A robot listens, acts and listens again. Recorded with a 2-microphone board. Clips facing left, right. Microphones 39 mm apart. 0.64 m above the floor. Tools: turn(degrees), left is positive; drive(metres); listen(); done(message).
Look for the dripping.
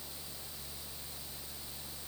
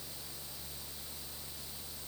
listen()
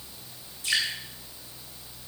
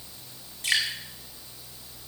turn(degrees=-65)
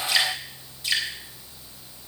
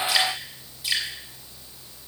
done("Found it: dripping, straight ahead.")